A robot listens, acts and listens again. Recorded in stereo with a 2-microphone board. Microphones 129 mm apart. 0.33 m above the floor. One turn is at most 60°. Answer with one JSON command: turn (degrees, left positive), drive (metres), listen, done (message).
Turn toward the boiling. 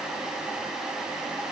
{"listen": true}
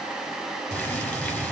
{"turn": 30}
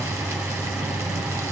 {"turn": -20}
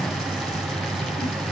{"done": "Found it: boiling, straight ahead, 2 to 4 m away."}